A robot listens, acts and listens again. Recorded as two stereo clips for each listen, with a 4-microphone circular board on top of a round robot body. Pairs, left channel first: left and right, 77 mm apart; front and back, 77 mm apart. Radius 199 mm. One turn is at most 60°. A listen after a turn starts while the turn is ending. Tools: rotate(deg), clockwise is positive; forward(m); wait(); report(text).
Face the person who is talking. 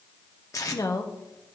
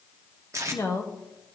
rotate(-45)
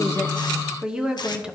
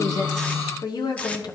rotate(10)
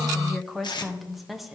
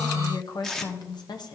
report("Found it: a woman speaking, straight ahead, 1 to 2 m away.")